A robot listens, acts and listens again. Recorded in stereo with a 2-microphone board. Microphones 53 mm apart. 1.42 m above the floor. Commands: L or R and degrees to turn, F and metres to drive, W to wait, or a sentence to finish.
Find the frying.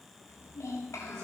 W
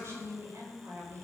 W
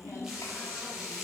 R30
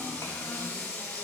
L15
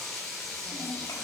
Facing the frying, over 4 m away.